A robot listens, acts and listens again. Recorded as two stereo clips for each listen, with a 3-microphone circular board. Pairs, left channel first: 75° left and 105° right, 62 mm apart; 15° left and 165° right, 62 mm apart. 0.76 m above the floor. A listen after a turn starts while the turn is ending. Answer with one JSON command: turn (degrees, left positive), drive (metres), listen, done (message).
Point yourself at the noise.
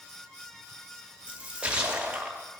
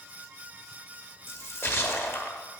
{"turn": -35}
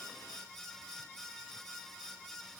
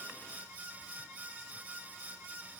{"done": "I heard a splash from this way, but can't make it out now."}